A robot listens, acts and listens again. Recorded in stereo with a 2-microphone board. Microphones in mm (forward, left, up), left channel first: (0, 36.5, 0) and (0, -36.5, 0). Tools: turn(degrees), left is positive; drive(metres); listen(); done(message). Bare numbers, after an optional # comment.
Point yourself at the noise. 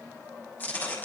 # The tearing paper: about 25° left or 155° left.
turn(25)
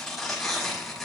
done("Found it: tearing paper, straight ahead.")